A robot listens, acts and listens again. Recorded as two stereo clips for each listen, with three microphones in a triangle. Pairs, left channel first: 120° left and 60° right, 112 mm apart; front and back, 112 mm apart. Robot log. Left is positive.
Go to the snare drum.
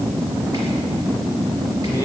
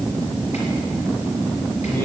cmd idle
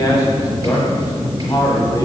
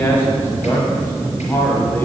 cmd idle
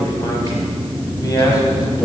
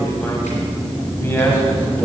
end: I can't make out a snare drum to turn to.